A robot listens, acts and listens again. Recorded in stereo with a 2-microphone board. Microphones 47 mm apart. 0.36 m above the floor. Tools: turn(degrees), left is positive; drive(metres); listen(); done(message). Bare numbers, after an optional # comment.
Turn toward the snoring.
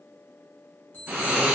# The snoring: about 35° right or 145° right.
turn(-35)
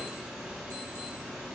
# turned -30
# So it is at 10° right.
turn(-10)
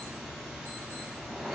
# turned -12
done("Found it: snoring, straight ahead.")